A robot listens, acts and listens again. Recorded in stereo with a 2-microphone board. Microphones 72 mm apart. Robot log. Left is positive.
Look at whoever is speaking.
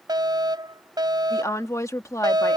note: The woman speaking: about 45° left or 135° left.
cmd yaw +45
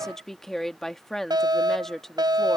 end: Facing the woman speaking.